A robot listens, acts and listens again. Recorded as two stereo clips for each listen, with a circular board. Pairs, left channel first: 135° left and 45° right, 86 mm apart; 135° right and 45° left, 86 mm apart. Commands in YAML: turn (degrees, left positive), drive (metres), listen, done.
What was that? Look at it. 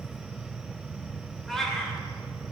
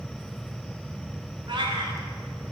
turn: 50
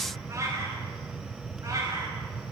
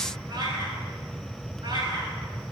done: "Facing the cat meowing, over 4 m away."